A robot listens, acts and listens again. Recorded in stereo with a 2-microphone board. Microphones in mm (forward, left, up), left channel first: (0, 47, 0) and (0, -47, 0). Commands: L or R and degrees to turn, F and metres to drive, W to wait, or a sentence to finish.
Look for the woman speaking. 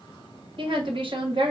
R60
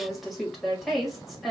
Found it: a woman speaking, straight ahead.